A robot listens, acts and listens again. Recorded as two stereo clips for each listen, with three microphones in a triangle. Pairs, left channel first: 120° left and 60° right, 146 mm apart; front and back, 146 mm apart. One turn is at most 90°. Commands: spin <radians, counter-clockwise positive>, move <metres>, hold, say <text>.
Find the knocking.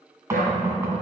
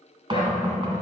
spin -1.57
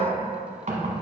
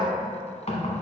spin -0.61
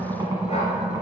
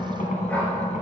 say Facing the knocking, 1 to 2 m away.